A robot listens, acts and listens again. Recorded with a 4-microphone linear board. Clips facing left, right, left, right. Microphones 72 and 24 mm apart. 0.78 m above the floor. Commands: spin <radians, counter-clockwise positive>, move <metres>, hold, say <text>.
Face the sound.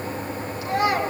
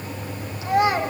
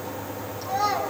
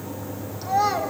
spin -0.35
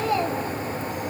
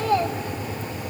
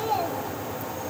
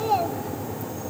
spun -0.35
spin -2.44
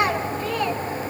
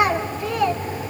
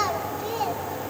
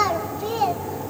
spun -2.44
say Facing the child speaking, 2 to 4 m away.